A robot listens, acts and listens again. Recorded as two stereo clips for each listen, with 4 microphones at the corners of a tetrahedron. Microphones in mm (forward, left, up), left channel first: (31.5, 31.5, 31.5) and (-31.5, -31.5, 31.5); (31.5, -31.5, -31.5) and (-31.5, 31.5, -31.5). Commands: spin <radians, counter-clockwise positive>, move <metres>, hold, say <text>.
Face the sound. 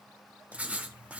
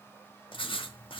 spin -1.05
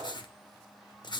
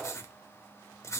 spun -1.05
spin 0.17
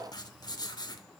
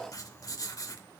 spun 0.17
say Found it: writing, straight ahead.